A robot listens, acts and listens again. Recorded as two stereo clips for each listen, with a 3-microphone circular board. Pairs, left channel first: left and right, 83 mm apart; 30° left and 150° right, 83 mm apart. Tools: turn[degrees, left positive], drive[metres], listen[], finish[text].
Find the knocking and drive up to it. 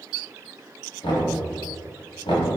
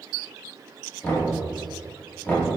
Thought: The knocking: 95° left.
Action: turn[95]
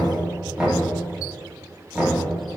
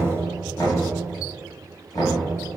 Thought: The knocking is now 15° right.
Action: turn[-15]
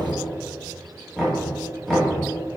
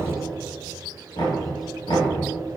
Action: drive[1.0]
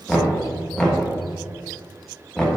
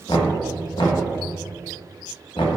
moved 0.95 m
Thought: The knocking is now 10° left.
Action: turn[10]
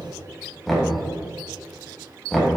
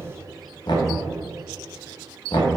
Action: drive[1.0]
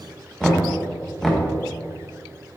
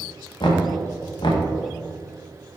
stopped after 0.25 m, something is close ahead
Action: finish[I am next to the knocking.]